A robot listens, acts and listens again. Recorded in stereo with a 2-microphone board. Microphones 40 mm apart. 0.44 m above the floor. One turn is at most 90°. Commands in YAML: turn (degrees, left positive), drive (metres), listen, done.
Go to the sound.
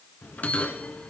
turn: 40
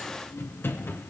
turn: 90
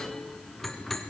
turn: 10
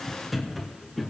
drive: 1.0
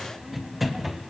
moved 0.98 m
drive: 1.0
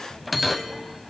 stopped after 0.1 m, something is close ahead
done: "I am next to the bell."